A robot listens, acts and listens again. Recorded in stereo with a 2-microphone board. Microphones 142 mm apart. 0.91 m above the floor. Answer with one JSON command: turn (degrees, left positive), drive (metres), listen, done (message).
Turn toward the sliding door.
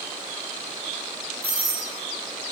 {"listen": true}
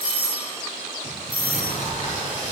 {"turn": 60}
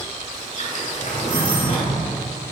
{"turn": 60}
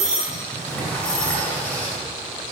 {"turn": 10}
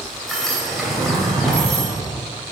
{"done": "Found it: a sliding door, straight ahead, 2 to 4 m away."}